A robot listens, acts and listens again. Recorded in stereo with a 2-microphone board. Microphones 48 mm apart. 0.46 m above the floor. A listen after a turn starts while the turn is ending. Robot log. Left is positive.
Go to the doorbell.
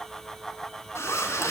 cmd idle
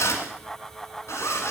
cmd idle
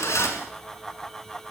end: I can't make out a doorbell, only a zipper.